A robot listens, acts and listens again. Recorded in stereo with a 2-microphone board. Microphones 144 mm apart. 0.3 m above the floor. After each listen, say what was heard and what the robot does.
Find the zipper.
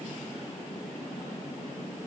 Keep listening.
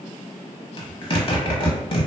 The zipper: about 40° left or 140° left. Turn 40° left.
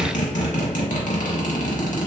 So it is at 95° left. Turn 95° left.
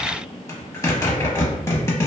The zipper is now 25° left. Turn 25° left.
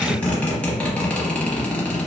The zipper is now 10° left. Turn 10° left.
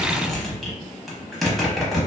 Facing the zipper, under 1 m away.